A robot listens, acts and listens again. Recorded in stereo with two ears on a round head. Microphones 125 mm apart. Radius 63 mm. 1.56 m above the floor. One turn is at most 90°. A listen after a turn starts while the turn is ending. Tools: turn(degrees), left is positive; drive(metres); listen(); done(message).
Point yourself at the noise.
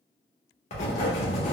turn(degrees=50)
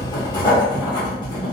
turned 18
turn(degrees=30)
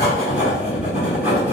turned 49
turn(degrees=-15)
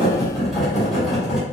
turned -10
done("Facing the writing.")